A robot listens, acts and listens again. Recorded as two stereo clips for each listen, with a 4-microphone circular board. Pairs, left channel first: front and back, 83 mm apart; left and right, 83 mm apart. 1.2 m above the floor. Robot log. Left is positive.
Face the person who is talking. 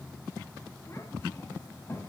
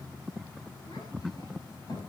note: The child speaking: 60° left.
cmd yaw +60
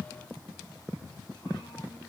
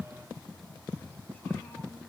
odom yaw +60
cmd idle
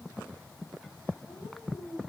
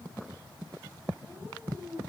note: The child speaking is now 20° left.
cmd yaw +20
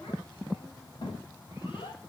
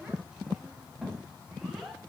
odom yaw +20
end: Facing the child speaking.